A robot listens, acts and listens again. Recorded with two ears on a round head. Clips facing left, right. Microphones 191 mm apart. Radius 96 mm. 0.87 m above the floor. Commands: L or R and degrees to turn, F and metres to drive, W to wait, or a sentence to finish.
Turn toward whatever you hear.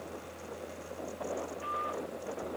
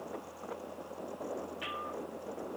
W
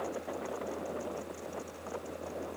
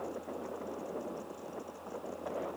W
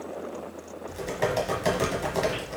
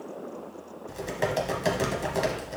R30
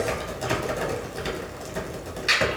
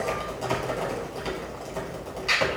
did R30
L25
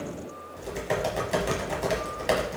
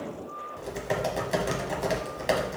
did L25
Found it: typing on a keyboard, straight ahead, 1 to 2 m away.